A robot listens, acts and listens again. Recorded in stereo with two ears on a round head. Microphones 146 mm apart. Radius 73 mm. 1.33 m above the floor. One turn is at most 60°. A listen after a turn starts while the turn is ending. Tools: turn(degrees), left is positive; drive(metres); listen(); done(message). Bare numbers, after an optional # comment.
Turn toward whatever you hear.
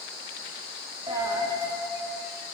# The dropped coin: about 25° right or 155° right.
turn(-25)
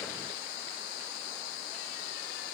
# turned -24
listen()
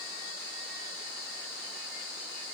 done("I heard a dropped coin, but can't make it out now. It was about straight ahead or 130° right.")